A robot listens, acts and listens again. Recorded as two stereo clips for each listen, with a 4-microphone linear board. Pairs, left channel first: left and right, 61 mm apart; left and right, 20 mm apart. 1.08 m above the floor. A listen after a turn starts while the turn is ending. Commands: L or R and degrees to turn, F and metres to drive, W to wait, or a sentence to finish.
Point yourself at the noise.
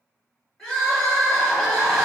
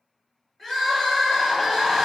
L30
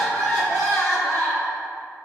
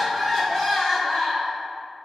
L140
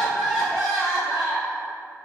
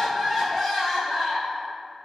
Found it: crying, straight ahead.